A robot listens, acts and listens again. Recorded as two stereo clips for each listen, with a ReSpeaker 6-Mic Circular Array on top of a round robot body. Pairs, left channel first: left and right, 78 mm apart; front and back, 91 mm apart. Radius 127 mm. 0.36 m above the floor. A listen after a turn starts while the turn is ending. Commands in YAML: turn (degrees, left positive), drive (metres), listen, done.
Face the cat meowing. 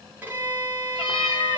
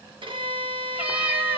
turn: 105
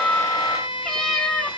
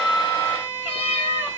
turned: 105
turn: 10
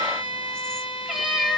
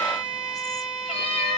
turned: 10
done: "Facing the cat meowing, under 1 m away."